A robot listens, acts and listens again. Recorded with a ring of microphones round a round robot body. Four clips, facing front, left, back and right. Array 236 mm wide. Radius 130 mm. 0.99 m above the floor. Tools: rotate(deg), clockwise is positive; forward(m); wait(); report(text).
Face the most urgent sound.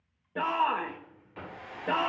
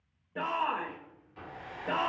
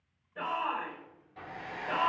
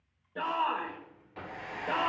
rotate(-10)
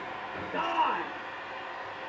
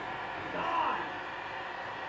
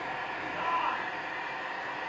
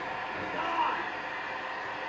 report("Found it: a shout, straight ahead, 1 to 2 m away.")